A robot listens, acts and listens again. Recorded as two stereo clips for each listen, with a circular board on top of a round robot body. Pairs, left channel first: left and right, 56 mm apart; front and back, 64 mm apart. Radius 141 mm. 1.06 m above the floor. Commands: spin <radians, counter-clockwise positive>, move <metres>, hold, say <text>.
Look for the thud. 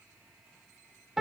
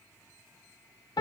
hold
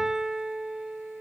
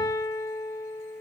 hold
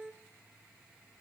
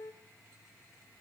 say I can't make out a thud to turn to.